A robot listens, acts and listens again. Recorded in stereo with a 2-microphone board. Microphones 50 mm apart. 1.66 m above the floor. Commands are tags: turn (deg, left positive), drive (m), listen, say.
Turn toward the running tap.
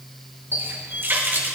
<turn deg="-40"/>
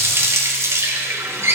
<turn deg="-90"/>
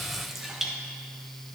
<say>Facing the running tap.</say>